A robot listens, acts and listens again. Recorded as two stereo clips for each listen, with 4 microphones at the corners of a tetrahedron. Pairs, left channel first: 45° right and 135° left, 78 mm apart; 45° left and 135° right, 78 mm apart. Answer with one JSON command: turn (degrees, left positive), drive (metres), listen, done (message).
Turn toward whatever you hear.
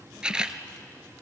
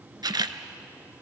{"turn": -150}
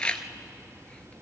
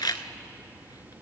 {"turn": 30}
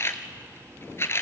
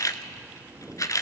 {"turn": 10}
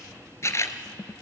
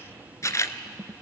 {"done": "Found it: a camera shutter, straight ahead."}